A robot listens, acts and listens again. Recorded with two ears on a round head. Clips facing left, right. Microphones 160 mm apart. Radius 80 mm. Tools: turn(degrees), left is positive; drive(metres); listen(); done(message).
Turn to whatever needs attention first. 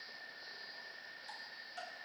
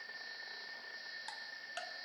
listen()
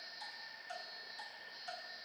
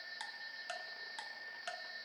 listen()
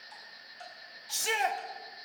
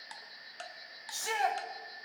turn(degrees=30)
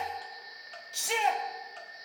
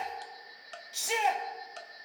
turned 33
done("Found it: a shout, straight ahead, 1 to 2 m away.")